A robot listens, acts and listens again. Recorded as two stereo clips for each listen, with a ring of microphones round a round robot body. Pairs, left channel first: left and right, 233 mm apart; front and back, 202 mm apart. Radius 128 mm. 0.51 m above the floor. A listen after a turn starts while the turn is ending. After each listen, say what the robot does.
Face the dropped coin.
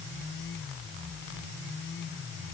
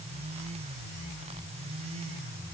Keep listening.
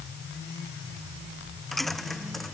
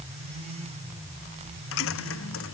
Found it: a dropped coin, straight ahead.